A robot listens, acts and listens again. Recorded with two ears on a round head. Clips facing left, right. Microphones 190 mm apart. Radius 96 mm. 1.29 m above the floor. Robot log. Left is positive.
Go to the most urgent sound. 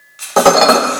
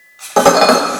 cmd idle
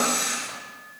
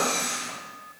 cmd idle
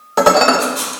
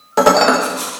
end: I can't make out anything urgent to turn to.